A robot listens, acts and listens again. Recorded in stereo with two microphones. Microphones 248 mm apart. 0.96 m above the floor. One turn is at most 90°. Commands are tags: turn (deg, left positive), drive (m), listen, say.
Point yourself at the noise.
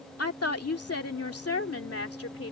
<turn deg="65"/>
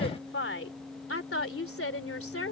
<turn deg="65"/>
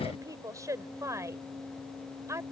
<turn deg="-10"/>
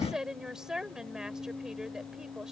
<say>Facing the woman speaking.</say>